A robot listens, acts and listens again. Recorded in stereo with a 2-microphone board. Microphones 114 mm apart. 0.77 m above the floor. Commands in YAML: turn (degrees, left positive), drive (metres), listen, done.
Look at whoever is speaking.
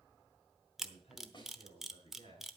turn: 90
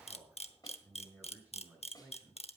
turn: -15
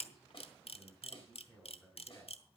done: "Facing the man speaking."